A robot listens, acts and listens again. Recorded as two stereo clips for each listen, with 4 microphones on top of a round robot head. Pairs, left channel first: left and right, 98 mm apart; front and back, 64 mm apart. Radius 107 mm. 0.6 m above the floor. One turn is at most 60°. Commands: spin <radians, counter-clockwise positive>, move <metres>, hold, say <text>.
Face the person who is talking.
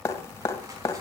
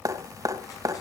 hold
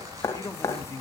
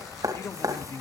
spin 0.61
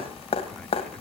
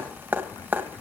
hold
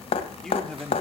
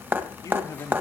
say Found it: a man speaking, straight ahead, 2 to 4 m away.